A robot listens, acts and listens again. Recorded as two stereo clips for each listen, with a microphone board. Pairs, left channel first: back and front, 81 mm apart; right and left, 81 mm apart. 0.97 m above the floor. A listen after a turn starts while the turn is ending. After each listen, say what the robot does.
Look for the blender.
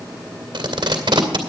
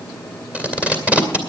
Keep listening.
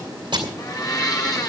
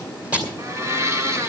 Turn 140° left.
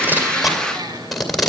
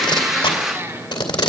Turn 35° left.
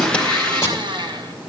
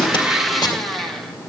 Facing the blender, 1 to 2 m away.